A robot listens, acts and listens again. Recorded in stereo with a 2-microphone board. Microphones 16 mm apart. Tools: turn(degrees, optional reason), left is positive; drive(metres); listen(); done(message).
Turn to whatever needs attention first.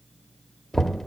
listen()
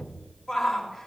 turn(degrees=-30)
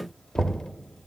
listen()
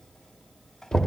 listen()
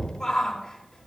turn(degrees=20, reason="So it is at 20° left.")
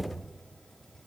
listen()
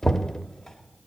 listen()
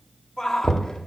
done("Found it: a shout, straight ahead, 2 to 4 m away.")